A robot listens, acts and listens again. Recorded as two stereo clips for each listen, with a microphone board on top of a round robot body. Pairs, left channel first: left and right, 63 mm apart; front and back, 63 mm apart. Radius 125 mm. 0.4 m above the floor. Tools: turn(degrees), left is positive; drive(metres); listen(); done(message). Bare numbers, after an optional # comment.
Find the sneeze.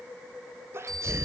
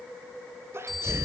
# The sneeze: 135° right.
turn(-135)
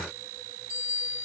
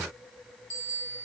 done("Facing where the sneeze came from. I can't hear it now.")